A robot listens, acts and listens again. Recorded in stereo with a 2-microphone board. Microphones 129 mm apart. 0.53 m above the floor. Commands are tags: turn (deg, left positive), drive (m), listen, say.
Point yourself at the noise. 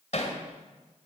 <turn deg="60"/>
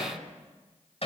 <turn deg="55"/>
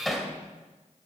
<say>Found it: hammering, straight ahead, 2 to 4 m away.</say>